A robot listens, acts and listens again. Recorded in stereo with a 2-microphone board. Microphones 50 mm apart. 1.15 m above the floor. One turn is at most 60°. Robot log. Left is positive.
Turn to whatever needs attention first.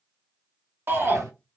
note: The shout: about 45° right or 135° right.
cmd yaw -45
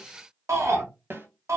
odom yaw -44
note: So it is at 90° right.
cmd yaw -60
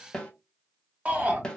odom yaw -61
note: The shout is now 30° right.
cmd yaw -30
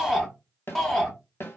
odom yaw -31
end: Facing the shout, 1 to 2 m away.